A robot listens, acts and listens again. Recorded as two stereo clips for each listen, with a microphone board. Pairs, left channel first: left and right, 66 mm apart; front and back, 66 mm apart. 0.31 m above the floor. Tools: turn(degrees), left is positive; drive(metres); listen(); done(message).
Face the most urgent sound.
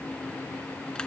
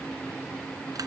listen()
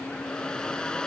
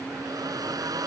listen()
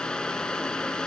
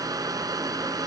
done("I can't make out anything urgent to turn to.")